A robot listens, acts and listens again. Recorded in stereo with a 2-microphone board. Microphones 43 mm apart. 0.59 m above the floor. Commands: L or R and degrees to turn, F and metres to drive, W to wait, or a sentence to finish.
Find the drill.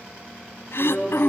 L30
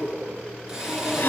R15
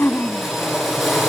Facing the drill, over 4 m away.